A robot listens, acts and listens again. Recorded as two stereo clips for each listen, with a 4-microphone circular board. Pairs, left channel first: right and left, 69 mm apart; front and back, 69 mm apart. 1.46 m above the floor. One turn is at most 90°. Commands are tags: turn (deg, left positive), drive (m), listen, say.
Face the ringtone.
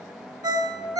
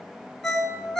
<turn deg="85"/>
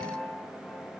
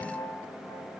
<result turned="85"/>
<listen/>
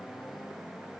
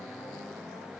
<listen/>
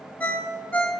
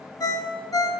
<turn deg="-20"/>
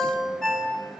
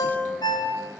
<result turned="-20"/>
<say>Facing the ringtone, under 1 m away.</say>